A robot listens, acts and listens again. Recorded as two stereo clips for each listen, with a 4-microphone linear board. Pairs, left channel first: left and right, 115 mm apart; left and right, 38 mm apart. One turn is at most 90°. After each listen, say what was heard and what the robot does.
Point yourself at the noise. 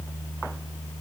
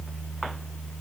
Keep listening.
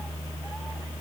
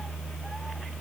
Keep listening.
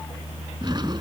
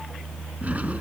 The drawer: about 40° right or 140° right. Turn 40° right.
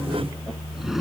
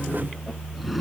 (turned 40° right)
Keep listening.
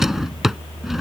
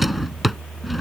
Facing the drawer.